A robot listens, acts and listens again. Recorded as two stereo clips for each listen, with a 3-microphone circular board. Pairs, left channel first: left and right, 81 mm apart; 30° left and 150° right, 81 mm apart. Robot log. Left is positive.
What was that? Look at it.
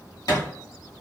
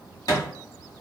note: The thud: 65° left.
cmd yaw +65
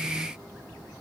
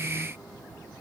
end: Facing where the thud came from. I can't hear it now.